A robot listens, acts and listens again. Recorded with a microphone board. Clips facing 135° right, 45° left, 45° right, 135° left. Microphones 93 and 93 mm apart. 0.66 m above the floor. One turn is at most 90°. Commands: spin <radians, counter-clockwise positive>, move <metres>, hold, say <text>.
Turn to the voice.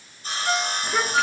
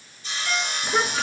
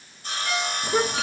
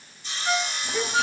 spin -0.70
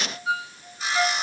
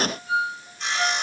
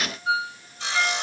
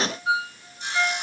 hold
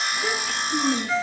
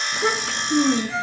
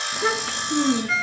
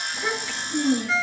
say Facing the child speaking, over 4 m away.